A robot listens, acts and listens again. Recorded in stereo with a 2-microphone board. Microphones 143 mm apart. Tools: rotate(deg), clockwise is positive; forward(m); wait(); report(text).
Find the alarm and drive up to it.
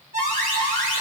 rotate(70)
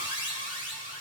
rotate(40)
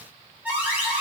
rotate(10)
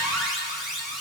forward(1.0)
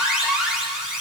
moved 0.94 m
forward(1.0)
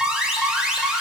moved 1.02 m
forward(1.0)
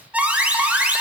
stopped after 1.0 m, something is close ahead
rotate(10)
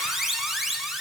report("Arrived at the alarm, straight ahead.")